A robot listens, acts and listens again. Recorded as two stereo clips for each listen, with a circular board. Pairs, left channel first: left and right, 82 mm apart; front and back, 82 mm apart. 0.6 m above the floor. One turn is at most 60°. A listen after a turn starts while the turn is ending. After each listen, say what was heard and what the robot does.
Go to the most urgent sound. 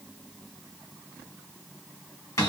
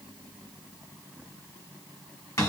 Keep listening.
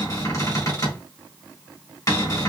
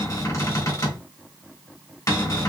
Keep listening.
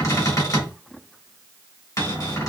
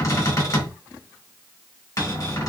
I can't make out anything urgent, only a cupboard door.